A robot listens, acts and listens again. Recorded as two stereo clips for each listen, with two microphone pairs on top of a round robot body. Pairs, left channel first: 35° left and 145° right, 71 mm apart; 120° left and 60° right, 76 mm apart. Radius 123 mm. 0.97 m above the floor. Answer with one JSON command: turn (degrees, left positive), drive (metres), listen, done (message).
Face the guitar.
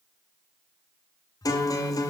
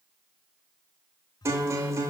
{"done": "Facing the guitar, 1 to 2 m away."}